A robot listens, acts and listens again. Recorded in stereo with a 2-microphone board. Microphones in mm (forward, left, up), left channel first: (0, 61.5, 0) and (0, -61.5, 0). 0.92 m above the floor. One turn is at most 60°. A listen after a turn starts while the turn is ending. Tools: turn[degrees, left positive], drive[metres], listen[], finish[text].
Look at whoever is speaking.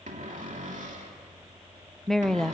Action: turn[30]
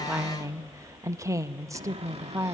Thought: So it is at 25° right.
Action: turn[-25]
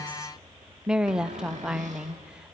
Action: finish[Found it: a woman speaking, straight ahead, under 1 m away.]